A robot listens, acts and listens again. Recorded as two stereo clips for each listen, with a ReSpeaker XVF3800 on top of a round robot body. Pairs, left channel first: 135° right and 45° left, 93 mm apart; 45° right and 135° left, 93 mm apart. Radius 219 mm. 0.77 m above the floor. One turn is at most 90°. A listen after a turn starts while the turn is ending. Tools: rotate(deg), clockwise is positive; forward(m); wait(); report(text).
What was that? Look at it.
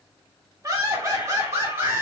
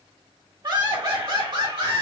rotate(-90)
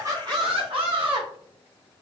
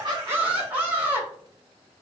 rotate(-60)
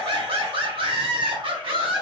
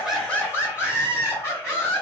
rotate(-20)
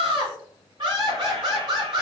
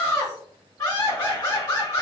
report("Found it: laughter, straight ahead, over 4 m away.")